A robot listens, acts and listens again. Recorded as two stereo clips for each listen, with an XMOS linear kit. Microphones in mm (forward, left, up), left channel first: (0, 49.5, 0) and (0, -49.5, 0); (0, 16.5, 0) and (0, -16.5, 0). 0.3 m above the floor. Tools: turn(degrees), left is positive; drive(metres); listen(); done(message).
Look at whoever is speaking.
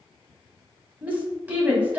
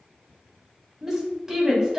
turn(degrees=-15)
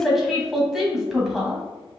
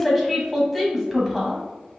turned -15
done("Found it: a woman speaking, straight ahead, 1 to 2 m away.")